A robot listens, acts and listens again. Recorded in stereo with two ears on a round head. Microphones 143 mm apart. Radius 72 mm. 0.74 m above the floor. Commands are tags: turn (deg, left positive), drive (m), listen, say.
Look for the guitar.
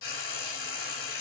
<listen/>
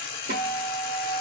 <turn deg="-65"/>
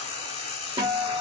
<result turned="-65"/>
<turn deg="-30"/>
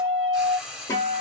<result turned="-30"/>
<turn deg="20"/>
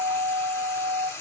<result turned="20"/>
<say>Found it: a guitar, straight ahead, 1 to 2 m away.</say>